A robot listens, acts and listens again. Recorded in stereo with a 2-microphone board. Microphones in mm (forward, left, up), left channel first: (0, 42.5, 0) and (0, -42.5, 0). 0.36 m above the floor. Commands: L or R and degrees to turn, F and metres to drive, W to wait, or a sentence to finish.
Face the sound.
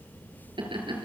R90
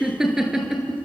R10
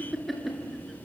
Facing the laughter, over 4 m away.